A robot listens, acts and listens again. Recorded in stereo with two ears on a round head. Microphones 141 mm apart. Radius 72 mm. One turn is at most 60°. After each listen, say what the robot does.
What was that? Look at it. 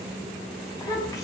Turn 20° left.
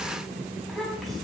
Facing the child speaking, over 4 m away.